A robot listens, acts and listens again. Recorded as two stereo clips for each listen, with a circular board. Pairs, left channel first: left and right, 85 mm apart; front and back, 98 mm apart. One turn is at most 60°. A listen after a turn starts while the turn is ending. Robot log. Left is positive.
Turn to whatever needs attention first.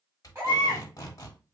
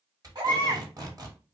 note: The baby crying: 145° right.
cmd yaw -60
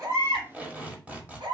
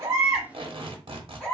note: The baby crying is now 80° right.
cmd yaw -60
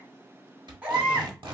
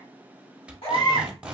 note: The baby crying is now 20° right.
cmd yaw -20
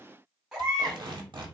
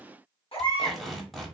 end: Facing the baby crying.